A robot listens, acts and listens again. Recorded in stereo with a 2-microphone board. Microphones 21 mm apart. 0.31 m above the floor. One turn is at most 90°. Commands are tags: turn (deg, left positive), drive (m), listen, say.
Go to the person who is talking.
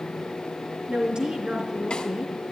<turn deg="-55"/>
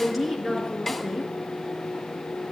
<drive m="1.0"/>
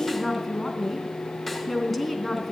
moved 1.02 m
<drive m="1.0"/>
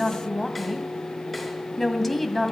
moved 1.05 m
<drive m="1.0"/>
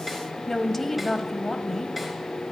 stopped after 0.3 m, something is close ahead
<turn deg="15"/>
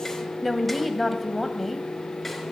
<say>Arrived at the woman speaking, straight ahead.</say>